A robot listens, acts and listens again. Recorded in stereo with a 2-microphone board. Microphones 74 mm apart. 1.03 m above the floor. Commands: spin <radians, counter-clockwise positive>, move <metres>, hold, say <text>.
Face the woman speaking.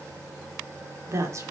spin -0.79
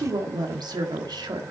spin -1.31
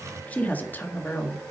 spin 0.61
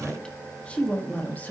spin 0.44
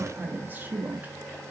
spin -0.44
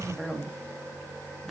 say Facing the woman speaking.